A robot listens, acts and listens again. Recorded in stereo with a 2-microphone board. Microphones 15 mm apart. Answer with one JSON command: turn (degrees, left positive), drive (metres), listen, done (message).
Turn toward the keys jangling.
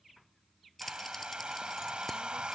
{"turn": 30}
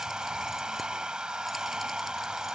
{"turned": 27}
{"listen": true}
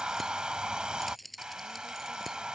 {"turn": 30}
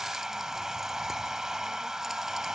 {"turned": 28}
{"listen": true}
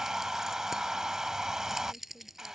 {"turn": -25}
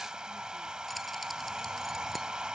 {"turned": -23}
{"listen": true}
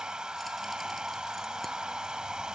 {"listen": true}
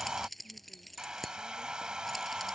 {"done": "Found it: keys jangling, straight ahead."}